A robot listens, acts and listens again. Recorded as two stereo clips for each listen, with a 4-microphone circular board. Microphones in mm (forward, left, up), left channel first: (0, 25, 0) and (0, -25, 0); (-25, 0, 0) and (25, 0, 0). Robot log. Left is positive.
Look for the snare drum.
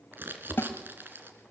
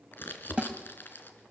note: The snare drum: 75° left.
cmd yaw +75
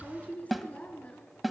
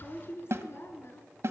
end: Facing the snare drum, 1 to 2 m away.